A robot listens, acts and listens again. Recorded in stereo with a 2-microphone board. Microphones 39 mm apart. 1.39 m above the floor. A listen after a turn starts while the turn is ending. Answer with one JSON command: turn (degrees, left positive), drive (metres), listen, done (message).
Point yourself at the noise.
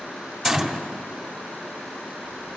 {"turn": -30}
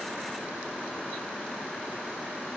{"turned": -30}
{"listen": true}
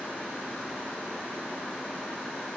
{"done": "I heard a gunshot, but can't make it out now. It was about 25° left or 145° right."}